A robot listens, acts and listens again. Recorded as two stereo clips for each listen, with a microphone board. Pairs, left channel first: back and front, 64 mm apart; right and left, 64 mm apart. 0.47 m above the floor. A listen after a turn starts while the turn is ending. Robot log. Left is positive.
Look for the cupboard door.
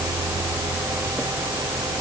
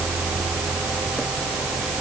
cmd idle
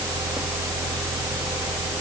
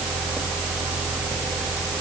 cmd idle
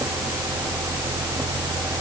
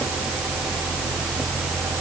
end: I can't make out a cupboard door.